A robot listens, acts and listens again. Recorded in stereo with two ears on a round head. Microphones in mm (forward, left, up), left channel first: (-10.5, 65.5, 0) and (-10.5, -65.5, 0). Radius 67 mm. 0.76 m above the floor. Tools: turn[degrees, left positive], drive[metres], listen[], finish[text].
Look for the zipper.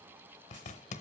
Thought: The zipper: about 50° left or 130° left.
Action: turn[50]
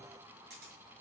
Action: listen[]
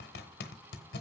Thought: So it is at 80° left.
Action: turn[80]
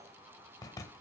Thought: The zipper is now 25° left.
Action: turn[25]
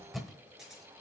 Action: finish[Facing the zipper.]